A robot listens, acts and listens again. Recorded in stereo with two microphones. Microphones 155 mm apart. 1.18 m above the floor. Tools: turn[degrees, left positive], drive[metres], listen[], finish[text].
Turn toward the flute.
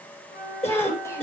Action: turn[90]
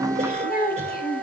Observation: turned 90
Action: finish[Found it: a flute, straight ahead, over 4 m away.]